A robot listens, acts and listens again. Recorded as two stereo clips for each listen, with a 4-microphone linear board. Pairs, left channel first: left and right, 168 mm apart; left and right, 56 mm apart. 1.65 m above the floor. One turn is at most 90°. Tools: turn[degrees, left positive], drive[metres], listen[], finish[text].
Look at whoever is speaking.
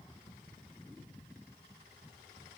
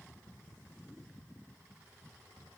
Action: listen[]
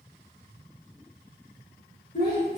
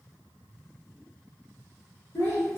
Thought: The child speaking: about 60° left or 120° left.
Action: turn[60]
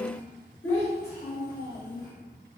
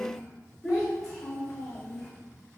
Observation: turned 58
Thought: So it is at 60° left.
Action: turn[60]
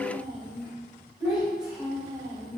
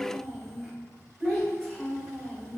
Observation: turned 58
Action: finish[Facing the child speaking, over 4 m away.]